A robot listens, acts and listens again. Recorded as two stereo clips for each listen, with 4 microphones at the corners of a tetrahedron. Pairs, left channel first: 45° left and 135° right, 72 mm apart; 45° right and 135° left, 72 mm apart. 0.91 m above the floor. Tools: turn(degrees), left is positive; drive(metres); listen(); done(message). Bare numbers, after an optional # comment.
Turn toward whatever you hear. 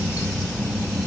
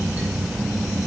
listen()
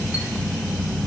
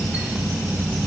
listen()
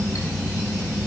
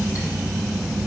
done("I can't make out anything to turn to.")